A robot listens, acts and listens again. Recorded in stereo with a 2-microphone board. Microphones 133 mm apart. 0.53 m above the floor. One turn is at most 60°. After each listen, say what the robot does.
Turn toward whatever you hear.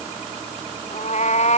Turn 55° left.
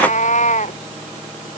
Turn 60° left.
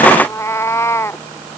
Turn 20° left.
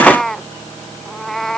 Found it: a cat meowing, straight ahead.